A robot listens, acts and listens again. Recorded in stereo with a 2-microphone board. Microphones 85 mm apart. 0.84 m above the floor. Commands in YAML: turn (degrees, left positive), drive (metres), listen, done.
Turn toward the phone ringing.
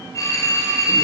turn: 40
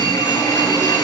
turn: 100
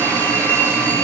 turn: 25
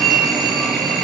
done: "Facing the phone ringing."